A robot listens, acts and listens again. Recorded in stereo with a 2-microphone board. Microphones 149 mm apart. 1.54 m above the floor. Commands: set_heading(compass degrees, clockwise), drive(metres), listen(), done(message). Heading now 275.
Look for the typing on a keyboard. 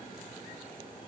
listen()
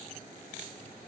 listen()
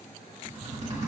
set_heading(320)
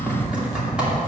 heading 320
done("Found it: typing on a keyboard, straight ahead.")